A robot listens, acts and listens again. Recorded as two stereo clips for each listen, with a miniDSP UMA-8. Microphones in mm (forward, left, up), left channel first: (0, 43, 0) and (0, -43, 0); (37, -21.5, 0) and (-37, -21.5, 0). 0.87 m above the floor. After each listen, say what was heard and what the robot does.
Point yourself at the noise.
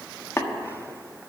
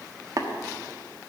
The tapping: 150° left. Turn 150° left.
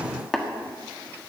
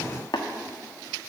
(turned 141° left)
Facing the tapping, 1 to 2 m away.